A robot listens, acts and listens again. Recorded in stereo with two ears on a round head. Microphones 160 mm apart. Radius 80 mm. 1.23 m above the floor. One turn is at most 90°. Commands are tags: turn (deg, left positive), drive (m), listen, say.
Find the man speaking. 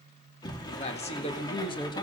<turn deg="25"/>
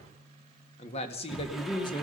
<turn deg="25"/>
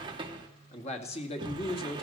<turn deg="30"/>
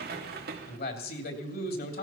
<turn deg="90"/>
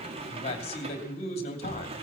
<turn deg="35"/>
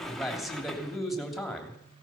<say>Facing the man speaking.</say>